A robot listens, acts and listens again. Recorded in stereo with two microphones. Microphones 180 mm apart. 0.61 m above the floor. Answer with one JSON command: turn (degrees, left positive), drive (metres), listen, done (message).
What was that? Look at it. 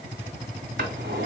{"turn": -70}
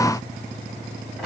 {"listen": true}
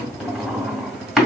{"done": "Found it: a drawer, straight ahead, 1 to 2 m away."}